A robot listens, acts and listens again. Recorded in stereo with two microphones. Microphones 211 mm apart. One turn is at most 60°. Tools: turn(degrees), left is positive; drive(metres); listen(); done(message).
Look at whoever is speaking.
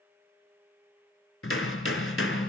listen()
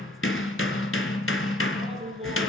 turn(degrees=-25)
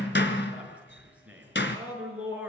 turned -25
done("Found it: a man speaking, straight ahead, over 4 m away.")